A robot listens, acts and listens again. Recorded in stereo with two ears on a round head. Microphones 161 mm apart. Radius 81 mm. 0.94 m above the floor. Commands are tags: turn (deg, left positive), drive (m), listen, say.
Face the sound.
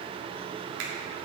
<turn deg="-90"/>
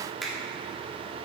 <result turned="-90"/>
<say>Found it: a finger snap, straight ahead.</say>